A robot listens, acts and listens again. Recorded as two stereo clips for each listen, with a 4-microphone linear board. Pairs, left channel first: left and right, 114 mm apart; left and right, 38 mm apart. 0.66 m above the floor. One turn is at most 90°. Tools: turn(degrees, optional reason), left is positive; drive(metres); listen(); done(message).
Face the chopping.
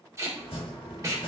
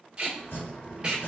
turn(degrees=60, reason="The chopping: about 60° left or 120° left.")
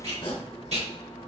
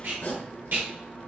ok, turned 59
turn(degrees=60, reason="So it is at 60° left.")
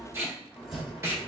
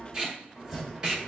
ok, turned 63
done("Facing the chopping, 1 to 2 m away.")